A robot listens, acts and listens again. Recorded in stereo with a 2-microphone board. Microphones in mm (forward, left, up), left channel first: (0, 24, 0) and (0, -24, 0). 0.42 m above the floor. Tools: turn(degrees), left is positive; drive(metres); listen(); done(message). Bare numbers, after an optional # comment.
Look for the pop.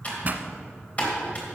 # The pop: about 40° right or 140° right.
turn(-40)
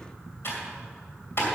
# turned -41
listen()
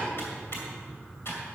done("I heard a pop, but can't make it out now. It was about 5° left or 100° right.")